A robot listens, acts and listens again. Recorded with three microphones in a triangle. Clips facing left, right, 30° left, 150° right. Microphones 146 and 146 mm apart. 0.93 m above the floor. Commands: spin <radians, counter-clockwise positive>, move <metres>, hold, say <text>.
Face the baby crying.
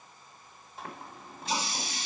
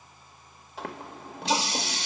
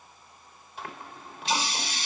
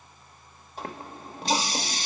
hold
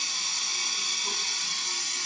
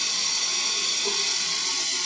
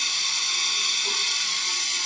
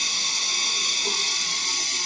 hold
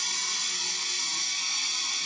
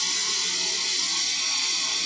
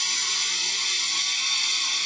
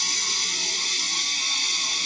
say I can't make out a baby crying, only a running tap.